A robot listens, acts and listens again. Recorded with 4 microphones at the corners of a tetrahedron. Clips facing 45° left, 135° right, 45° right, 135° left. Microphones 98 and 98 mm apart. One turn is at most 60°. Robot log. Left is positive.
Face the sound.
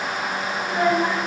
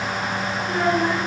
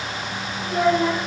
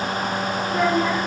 note: The child speaking: 20° right.
cmd yaw -20
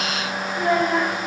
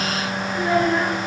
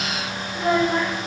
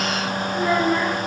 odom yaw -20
end: Facing the child speaking.